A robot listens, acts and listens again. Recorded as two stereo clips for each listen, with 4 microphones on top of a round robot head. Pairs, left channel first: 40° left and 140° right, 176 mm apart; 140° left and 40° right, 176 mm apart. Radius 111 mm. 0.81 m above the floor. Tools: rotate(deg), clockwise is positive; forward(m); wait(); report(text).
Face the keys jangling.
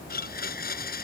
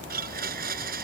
wait()
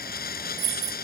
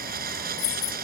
rotate(-170)
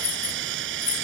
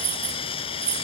rotate(10)
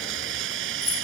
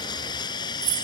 rotate(20)
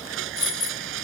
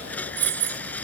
rotate(20)
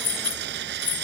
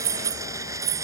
report("Found it: keys jangling, straight ahead.")